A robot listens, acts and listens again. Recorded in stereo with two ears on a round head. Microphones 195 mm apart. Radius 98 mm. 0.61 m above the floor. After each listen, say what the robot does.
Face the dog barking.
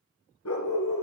Turn 75° left.
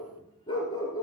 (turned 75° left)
Turn 20° left.
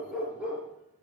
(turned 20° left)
Facing the dog barking.